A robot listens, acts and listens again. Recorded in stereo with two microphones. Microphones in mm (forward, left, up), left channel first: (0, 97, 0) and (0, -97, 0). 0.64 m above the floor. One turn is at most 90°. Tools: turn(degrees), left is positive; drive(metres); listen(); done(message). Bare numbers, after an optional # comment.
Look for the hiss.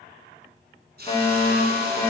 # The hiss: about 55° right or 125° right.
turn(-55)
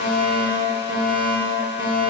listen()
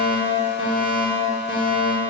listen()
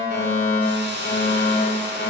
# So it is at 65° right.
turn(-65)
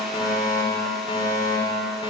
listen()
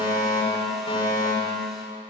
listen()
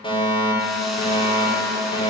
done("I heard a hiss from this way, but can't make it out now.")